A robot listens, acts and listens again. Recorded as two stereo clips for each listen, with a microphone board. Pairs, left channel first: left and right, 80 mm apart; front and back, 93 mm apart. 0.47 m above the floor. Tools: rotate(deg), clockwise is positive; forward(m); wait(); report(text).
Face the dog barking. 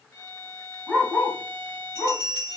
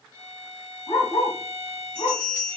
rotate(-25)
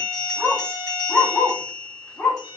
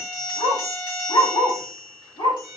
rotate(-25)
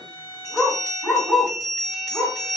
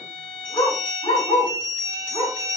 rotate(-15)
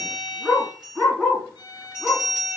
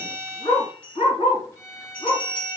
report("Facing the dog barking, 2 to 4 m away.")